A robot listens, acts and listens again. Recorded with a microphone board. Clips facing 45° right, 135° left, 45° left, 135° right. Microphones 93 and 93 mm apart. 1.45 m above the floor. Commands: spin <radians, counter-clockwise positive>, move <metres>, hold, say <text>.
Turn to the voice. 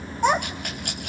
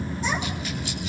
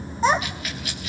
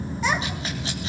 spin -0.26
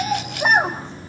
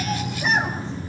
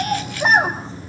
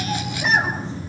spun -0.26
say Found it: a child speaking, straight ahead.